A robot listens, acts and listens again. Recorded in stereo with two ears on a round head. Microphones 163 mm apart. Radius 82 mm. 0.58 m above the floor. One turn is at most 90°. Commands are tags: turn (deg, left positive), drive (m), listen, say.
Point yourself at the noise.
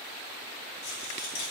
<turn deg="65"/>
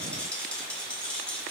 <turn deg="10"/>
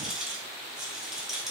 <say>Facing the rattle, over 4 m away.</say>